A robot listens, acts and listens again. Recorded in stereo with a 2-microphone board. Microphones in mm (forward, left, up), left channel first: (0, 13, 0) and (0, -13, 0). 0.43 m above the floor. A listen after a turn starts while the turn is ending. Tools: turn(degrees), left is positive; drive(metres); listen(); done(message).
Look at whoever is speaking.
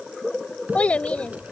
turn(degrees=55)
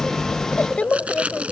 turn(degrees=55)
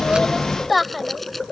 done("Facing the child speaking.")